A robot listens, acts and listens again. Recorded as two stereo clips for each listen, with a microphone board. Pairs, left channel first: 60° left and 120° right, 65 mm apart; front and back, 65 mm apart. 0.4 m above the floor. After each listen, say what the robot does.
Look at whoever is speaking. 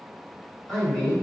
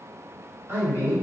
Turn 135° left.
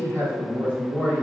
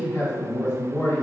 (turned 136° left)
Found it: a man speaking, straight ahead.